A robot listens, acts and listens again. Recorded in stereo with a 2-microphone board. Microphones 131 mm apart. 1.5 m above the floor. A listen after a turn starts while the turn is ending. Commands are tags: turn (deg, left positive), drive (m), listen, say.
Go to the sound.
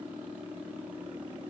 <listen/>
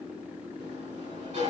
<turn deg="-60"/>
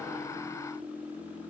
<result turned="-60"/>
<listen/>
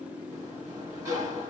<turn deg="-30"/>
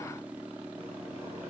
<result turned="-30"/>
<listen/>
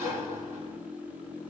<turn deg="-20"/>
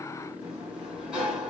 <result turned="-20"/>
<drive m="1.0"/>
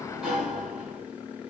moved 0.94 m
<drive m="1.0"/>
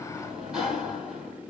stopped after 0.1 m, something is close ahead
<say>I am next to the sliding door.</say>